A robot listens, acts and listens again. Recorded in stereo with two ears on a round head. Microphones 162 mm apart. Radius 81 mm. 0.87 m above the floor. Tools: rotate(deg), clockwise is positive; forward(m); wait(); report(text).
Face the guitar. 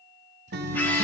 rotate(60)
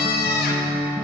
rotate(15)
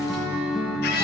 report("Facing the guitar, 1 to 2 m away.")